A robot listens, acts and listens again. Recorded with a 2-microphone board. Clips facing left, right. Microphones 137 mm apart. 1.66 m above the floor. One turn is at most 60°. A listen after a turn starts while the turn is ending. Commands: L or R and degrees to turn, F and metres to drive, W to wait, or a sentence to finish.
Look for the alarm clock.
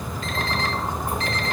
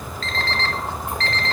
L30
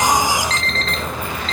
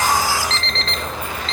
L60
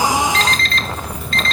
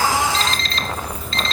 L60
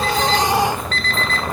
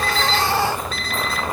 R10
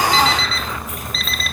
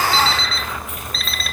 Facing the alarm clock, 1 to 2 m away.